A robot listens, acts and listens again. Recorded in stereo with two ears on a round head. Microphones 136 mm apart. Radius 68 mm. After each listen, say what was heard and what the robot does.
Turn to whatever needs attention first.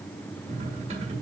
Keep listening.
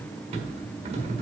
Keep listening.
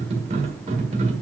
I can't make out anything urgent to turn to.